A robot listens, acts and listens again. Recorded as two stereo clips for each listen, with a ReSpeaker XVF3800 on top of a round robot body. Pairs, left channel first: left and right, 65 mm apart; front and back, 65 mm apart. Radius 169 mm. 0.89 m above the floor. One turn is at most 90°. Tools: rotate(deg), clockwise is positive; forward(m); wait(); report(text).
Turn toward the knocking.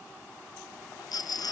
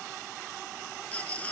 wait()
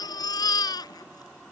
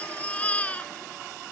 wait()
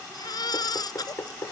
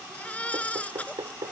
rotate(-90)
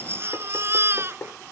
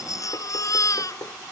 rotate(-35)
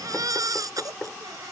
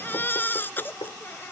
rotate(-10)
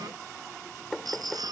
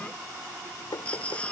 report("Found it: knocking, straight ahead.")